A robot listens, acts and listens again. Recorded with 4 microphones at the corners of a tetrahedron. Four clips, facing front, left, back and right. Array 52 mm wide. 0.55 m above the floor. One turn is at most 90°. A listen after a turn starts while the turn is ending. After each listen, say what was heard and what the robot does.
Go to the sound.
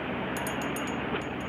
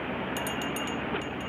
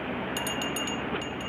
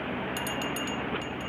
The bell: 160° left. Turn 90° left.
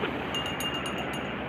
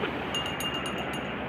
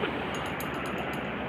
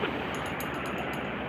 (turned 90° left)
The bell is now 45° left. Turn 45° left.
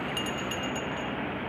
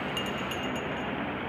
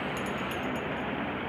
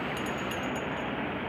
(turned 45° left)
Keep listening.
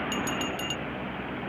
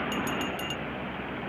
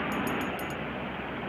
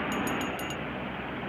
Keep listening.
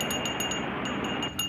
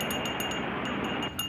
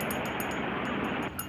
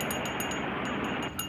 Drive 1.0 m forward.
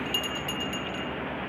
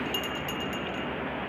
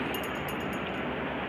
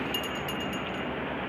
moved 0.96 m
Keep listening.
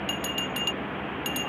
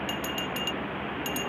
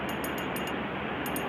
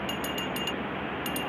Drive 1.0 m forward.
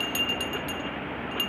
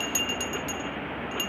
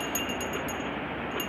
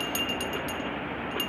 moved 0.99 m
The bell is now 10° left. Turn 10° left.
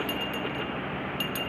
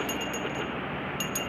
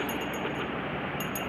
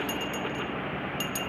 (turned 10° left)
Drive 1.0 m forward.
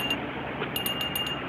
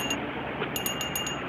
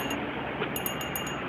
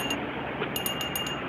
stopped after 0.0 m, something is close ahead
I am next to the bell.